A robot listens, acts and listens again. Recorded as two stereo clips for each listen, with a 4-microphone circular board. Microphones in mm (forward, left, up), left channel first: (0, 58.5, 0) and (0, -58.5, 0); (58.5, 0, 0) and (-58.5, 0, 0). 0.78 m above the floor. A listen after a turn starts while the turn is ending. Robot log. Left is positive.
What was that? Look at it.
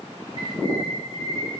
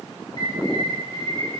note: The bird: 55° left.
cmd yaw +55
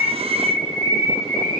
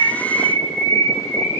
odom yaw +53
end: Facing the bird.